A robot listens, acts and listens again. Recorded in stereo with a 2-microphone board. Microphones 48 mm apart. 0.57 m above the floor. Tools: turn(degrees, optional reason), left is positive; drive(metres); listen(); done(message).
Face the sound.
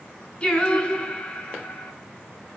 turn(degrees=30, reason="The singing: about 30° left or 150° left.")
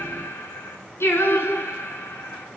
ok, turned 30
turn(degrees=110, reason="So it is at 110° left.")
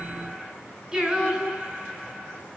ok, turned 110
turn(degrees=-15, reason="The singing is now 15° right.")
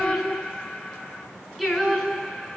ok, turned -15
done("Found it: singing, straight ahead.")